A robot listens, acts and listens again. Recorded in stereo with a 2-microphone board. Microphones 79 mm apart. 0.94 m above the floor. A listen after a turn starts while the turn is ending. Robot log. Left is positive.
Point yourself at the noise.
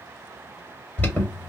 note: The alarm: about 20° left or 160° left.
cmd yaw +20
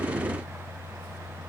cmd idle
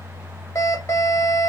note: So it is at 135° left.
cmd yaw +135
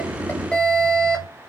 note: The alarm is now 10° left.
cmd yaw +10
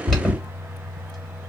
end: Facing the alarm, 1 to 2 m away.